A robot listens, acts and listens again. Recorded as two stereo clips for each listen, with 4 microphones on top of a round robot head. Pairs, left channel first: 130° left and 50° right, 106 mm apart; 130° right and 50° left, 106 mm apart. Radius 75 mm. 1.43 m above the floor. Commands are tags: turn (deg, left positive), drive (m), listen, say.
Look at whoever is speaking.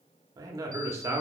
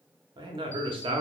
<turn deg="15"/>
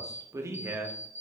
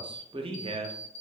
<turn deg="20"/>
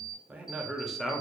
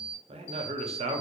<turn deg="45"/>
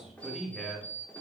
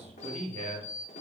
<turn deg="45"/>
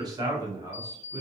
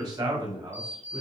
<turn deg="10"/>
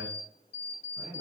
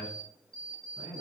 <say>Facing the man speaking.</say>